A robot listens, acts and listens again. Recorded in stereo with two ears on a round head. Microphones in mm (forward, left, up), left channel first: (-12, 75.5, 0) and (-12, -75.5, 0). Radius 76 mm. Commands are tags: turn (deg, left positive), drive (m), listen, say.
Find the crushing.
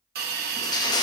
<turn deg="25"/>
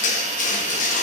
<turn deg="130"/>
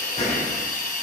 <turn deg="40"/>
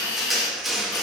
<say>Found it: crushing, straight ahead.</say>